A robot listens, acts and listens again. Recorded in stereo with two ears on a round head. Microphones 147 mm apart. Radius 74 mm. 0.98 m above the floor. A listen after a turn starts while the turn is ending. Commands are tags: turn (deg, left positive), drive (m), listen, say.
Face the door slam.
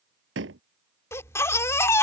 <turn deg="-90"/>
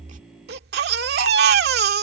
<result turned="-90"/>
<say>I heard a door slam from this way, but can't make it out now.</say>